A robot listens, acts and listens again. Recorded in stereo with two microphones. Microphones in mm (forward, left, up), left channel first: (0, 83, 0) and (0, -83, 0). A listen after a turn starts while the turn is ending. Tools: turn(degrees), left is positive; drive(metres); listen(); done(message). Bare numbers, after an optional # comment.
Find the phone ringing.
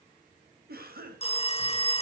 # The phone ringing: about 40° left or 140° left.
turn(40)
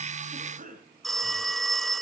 done("Found it: a phone ringing, straight ahead.")